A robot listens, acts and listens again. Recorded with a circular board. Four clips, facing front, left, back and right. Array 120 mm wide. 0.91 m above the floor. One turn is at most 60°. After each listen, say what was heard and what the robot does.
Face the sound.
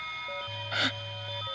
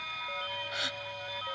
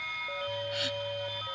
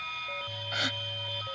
The gasp: 20° right. Turn 20° right.
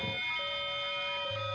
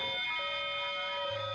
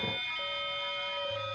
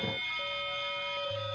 Facing where the gasp came from. I can't hear it now.